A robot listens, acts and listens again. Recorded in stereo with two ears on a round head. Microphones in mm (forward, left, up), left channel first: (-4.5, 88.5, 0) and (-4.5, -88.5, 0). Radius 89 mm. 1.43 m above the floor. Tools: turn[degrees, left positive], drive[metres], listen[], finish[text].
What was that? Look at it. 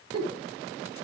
Thought: The giggle: about 20° right or 160° right.
Action: turn[-20]
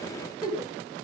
Action: finish[Facing the giggle, over 4 m away.]